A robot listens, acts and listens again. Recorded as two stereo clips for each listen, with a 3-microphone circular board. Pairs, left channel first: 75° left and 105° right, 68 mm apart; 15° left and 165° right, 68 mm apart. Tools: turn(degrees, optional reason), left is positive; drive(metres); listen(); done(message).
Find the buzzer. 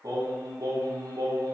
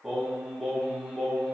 listen()
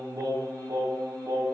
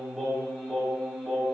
listen()
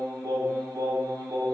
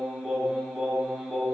done("I can't make out a buzzer, only singing.")